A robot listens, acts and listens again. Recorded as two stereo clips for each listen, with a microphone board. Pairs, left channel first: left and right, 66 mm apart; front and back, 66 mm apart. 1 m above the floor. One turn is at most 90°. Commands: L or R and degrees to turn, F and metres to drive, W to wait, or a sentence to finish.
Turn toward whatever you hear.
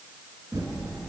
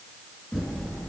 R85
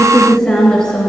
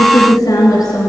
L10
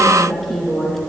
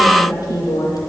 Found it: typing on a keyboard, straight ahead, 2 to 4 m away.